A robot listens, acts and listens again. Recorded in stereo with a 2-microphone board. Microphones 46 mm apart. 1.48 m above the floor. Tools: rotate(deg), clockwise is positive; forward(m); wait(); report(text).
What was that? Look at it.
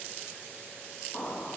rotate(-55)
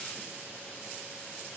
wait()
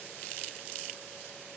report("I heard an explosion, but can't make it out now. It was about straight ahead or 70° left.")